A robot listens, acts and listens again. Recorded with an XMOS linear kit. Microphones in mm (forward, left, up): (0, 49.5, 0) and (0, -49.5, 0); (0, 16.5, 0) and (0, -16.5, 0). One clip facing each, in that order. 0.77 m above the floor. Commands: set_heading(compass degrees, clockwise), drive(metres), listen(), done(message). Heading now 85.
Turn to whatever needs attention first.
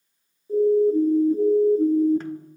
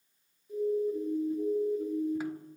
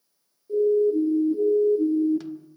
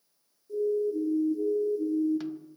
set_heading(45)
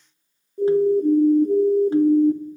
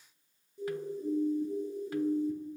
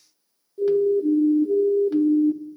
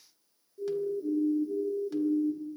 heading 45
set_heading(310)
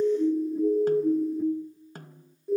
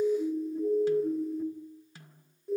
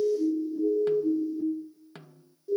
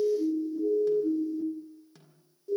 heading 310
done("Facing the siren, 2 to 4 m away.")